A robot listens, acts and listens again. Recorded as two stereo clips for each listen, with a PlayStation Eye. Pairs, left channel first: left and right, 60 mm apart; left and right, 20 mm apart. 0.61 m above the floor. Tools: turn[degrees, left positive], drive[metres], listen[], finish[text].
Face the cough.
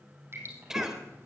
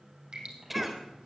Action: turn[-30]
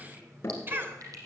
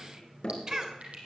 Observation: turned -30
Thought: So it is at 140° right.
Action: turn[-140]
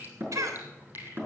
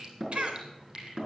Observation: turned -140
Thought: The cough is now 65° right.
Action: turn[-65]
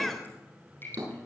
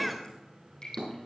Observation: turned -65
Action: finish[Facing the cough, 2 to 4 m away.]